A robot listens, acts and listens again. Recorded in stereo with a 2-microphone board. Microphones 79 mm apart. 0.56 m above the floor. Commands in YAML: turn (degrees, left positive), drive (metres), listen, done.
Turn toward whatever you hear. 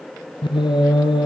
turn: 90
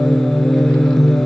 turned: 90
done: "Found it: singing, straight ahead, 2 to 4 m away."